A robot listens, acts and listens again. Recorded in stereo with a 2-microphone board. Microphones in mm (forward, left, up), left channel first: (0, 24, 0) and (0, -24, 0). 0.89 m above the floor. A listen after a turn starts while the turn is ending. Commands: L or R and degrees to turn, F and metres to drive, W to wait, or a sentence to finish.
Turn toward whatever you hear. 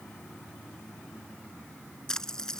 L30
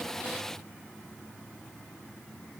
W
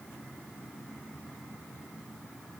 I heard a splash, but can't make it out now. It was about 15° right or 135° left.